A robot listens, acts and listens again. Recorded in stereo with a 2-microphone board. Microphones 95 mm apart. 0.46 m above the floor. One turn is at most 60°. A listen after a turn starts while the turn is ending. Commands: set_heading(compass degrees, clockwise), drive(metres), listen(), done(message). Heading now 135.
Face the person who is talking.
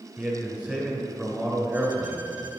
set_heading(165)
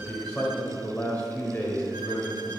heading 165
set_heading(150)
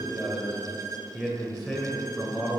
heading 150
done("Facing the man speaking.")